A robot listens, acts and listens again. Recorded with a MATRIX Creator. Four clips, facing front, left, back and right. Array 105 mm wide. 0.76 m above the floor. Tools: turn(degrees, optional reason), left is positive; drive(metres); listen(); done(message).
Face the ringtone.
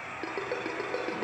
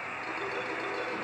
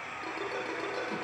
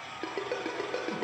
turn(degrees=-50, reason="The ringtone: 50° right.")
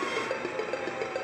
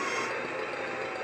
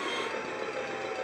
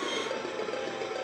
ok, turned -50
turn(degrees=-20, reason="The ringtone is now 20° right.")
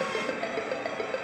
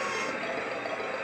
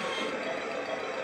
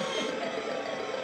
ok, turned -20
done("Facing the ringtone, over 4 m away.")